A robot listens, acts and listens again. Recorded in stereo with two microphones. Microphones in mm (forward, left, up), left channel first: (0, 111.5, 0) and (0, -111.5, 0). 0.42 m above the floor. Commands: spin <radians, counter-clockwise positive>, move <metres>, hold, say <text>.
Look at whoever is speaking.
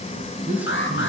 spin -0.52
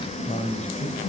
spin 0.61
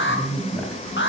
say Found it: a man speaking, straight ahead, 2 to 4 m away.